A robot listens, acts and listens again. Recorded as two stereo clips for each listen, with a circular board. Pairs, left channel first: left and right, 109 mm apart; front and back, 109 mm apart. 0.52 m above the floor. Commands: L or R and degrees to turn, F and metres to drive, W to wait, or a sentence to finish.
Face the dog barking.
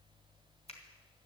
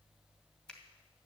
W
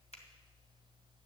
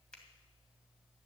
W
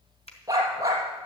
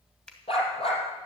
R30
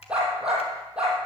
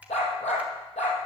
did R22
R10
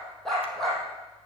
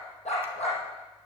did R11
Facing the dog barking, over 4 m away.